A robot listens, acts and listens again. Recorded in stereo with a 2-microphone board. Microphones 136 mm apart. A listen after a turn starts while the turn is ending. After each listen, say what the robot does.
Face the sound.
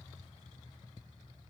Keep listening.
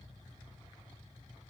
Keep listening.
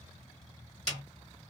Turn 55° right.
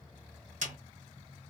Turn 70° right.
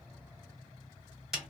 Facing the snare drum, 1 to 2 m away.